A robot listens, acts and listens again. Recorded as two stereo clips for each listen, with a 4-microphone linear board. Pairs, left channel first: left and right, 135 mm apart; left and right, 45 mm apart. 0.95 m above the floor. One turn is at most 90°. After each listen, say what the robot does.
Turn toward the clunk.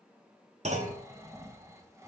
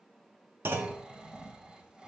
Turn 60° right.
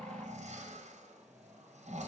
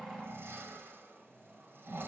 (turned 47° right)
Keep listening.
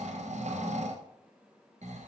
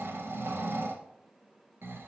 I heard a clunk, but can't make it out now. It was about 10° right or 75° right.